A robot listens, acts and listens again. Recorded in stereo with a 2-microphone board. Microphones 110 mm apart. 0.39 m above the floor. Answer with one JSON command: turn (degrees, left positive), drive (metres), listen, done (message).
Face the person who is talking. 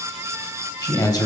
{"turn": 35}
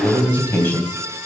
{"turn": 20}
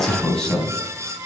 {"turn": 10}
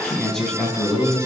{"done": "Facing the man speaking."}